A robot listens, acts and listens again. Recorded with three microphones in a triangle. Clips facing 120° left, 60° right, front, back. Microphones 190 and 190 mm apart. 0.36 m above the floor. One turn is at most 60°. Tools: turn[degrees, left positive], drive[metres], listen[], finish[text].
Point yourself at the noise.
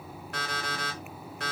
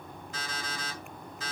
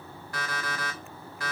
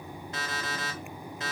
Thought: The alarm clock: 115° left.
Action: turn[60]
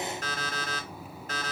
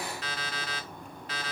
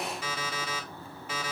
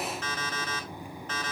Thought: The alarm clock is now 80° left.
Action: turn[60]
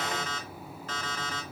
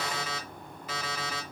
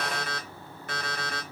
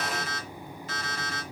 Thought: The alarm clock is now 20° left.
Action: turn[20]
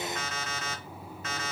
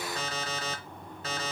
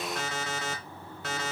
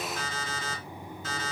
Action: finish[Found it: an alarm clock, straight ahead, 1 to 2 m away.]